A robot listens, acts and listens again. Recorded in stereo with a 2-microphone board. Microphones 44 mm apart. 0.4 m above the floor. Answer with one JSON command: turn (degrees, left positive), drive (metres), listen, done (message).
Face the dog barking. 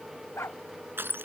{"turn": 90}
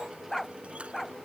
{"done": "Found it: a dog barking, straight ahead."}